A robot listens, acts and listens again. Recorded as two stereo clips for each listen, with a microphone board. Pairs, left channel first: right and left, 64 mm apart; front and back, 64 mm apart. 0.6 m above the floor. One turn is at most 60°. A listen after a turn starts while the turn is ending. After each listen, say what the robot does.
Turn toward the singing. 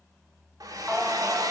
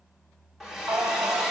Turn 60° left.
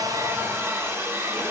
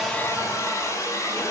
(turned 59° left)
Turn 60° left.
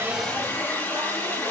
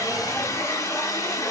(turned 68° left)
Turn 35° left.
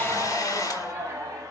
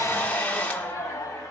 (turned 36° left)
Turn 40° left.
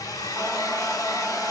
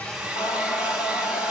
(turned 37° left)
Found it: singing, straight ahead.